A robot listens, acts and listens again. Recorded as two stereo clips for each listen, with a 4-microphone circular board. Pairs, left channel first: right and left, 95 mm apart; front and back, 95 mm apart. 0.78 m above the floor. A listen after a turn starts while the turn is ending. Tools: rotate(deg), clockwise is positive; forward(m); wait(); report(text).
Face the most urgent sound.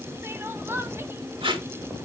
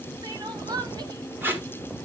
rotate(-150)
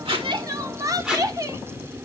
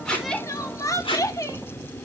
rotate(-45)
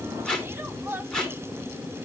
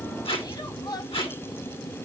rotate(-30)
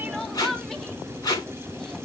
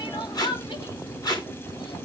report("Found it: crying, straight ahead.")